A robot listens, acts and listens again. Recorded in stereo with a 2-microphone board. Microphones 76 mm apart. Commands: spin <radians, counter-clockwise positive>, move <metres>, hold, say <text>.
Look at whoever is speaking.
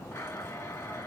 hold
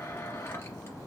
hold
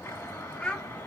spin 0.52
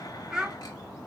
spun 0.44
spin -0.17
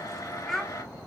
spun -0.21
say Facing the child speaking.